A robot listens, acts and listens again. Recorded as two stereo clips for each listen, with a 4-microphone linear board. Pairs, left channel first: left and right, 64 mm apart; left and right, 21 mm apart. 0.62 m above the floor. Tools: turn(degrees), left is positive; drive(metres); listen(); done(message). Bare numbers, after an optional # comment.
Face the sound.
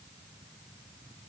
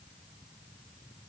listen()
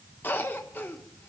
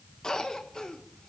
# The cough: about 30° left or 150° left.
turn(30)
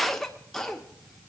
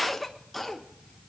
done("Found it: a cough, straight ahead, 1 to 2 m away.")